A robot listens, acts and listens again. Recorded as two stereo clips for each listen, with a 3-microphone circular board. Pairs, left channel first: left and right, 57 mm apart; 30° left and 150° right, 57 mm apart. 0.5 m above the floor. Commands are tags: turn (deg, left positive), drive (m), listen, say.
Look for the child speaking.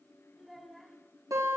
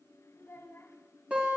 <say>Facing the child speaking.</say>